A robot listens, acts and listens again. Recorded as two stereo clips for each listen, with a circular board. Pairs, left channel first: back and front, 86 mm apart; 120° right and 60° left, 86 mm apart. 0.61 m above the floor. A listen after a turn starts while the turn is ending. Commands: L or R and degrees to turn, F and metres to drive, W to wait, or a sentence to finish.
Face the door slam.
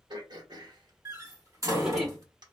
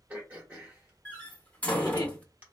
R50
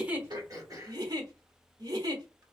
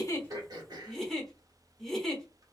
I heard a door slam from this way, but can't make it out now.